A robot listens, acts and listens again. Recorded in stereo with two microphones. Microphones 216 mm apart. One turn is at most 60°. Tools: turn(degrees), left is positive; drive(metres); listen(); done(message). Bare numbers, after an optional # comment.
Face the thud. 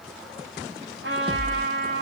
# The thud: about 20° right or 160° right.
turn(-20)
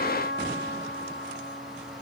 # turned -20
listen()
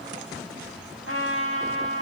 done("I heard a thud, but can't make it out now. It was about straight ahead or 140° right.")